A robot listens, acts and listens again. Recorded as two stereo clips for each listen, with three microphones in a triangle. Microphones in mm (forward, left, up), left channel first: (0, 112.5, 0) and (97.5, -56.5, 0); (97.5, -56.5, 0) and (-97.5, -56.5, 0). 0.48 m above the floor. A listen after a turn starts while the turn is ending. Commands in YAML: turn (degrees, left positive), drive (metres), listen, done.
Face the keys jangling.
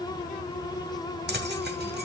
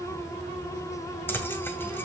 turn: -80
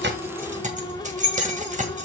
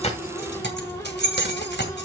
turn: -15
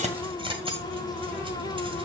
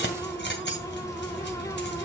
done: "Facing the keys jangling."